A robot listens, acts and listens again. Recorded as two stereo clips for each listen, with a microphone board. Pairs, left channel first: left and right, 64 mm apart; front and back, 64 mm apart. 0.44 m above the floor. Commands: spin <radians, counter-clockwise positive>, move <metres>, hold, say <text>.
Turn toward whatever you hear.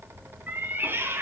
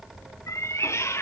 spin -0.79
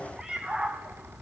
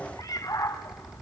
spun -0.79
spin -0.35
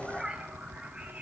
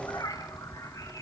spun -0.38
spin -0.35
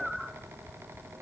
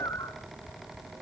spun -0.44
say Facing the cat meowing, 2 to 4 m away.